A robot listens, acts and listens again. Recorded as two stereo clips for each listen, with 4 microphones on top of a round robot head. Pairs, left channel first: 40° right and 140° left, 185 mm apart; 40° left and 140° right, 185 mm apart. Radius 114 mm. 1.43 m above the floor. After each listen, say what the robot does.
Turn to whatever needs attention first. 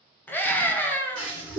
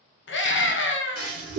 Turn 40° left.
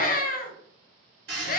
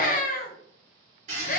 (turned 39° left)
Facing the scream, under 1 m away.